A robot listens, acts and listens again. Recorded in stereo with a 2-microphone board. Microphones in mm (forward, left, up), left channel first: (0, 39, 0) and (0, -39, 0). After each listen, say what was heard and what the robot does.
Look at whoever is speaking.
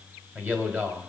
The man speaking: about 25° right or 155° right. Turn 25° right.
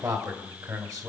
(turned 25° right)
So it is at 130° right. Turn 130° right.
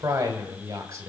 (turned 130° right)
The man speaking is now 45° right. Turn 45° right.
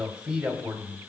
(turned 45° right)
The man speaking is now 15° right. Turn 15° right.
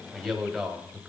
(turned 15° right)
Facing the man speaking, 2 to 4 m away.